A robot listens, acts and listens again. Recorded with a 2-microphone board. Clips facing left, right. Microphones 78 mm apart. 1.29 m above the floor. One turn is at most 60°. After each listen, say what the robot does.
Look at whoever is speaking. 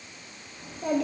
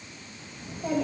Turn 60° left.
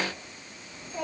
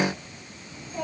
Facing the child speaking.